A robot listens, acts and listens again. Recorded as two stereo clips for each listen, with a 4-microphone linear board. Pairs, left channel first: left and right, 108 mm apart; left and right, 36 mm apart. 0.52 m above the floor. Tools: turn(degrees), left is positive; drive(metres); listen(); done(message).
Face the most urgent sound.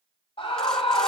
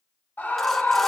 turn(degrees=60)
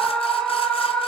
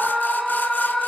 turn(degrees=10)
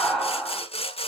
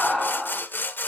done("Facing the scream, 2 to 4 m away.")